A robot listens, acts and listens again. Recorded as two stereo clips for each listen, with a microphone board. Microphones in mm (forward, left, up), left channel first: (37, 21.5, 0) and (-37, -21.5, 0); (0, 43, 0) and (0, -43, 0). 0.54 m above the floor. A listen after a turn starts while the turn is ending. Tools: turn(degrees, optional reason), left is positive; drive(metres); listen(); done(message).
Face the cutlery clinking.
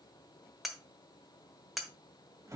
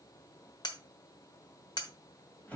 turn(degrees=120, reason="The cutlery clinking: 120° left.")
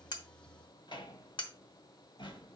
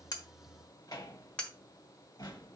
turn(degrees=10, reason="The cutlery clinking is now 10° left.")
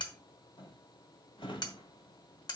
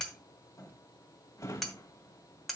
done("Found it: cutlery clinking, straight ahead, 1 to 2 m away.")